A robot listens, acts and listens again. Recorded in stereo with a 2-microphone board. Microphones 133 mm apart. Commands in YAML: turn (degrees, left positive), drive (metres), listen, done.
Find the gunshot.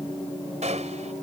turn: -65
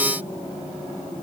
listen: true
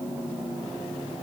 done: "I heard a gunshot, but can't make it out now. It was about straight ahead or 50° right."